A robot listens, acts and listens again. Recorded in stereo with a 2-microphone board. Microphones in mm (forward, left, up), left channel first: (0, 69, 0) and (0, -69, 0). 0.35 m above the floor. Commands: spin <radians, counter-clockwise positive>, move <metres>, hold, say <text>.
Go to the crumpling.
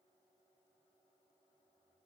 hold
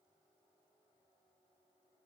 hold
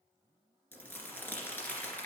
spin 0.52
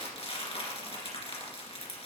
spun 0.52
spin 2.36
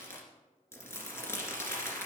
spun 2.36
spin 0.35
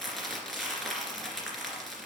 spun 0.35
move 1.0
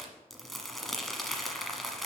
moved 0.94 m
move 1.0
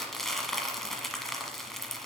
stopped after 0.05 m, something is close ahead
say Arrived at the crumpling, straight ahead.